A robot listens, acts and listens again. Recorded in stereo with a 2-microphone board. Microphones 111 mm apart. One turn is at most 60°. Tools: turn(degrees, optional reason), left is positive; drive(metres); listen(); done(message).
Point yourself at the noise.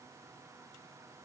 listen()
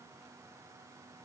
listen()
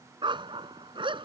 turn(degrees=-50, reason="The dog barking: about 50° right or 130° right.")
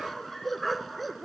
done("Facing the dog barking.")